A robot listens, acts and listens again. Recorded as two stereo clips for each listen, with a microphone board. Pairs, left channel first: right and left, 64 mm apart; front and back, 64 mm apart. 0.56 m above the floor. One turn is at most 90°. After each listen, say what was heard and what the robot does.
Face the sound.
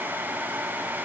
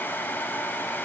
Keep listening.
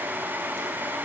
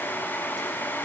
Keep listening.
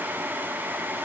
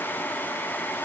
I can't make out anything to turn to.